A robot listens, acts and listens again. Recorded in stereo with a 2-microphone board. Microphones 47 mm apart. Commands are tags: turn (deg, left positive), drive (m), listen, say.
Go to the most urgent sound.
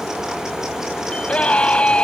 <turn deg="25"/>
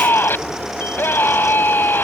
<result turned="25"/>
<turn deg="135"/>
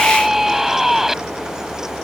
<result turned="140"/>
<drive m="1.0"/>
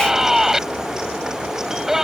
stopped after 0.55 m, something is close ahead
<turn deg="-10"/>
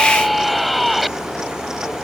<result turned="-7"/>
<say>Something is in my way. I am facing the scream but have not reached it.</say>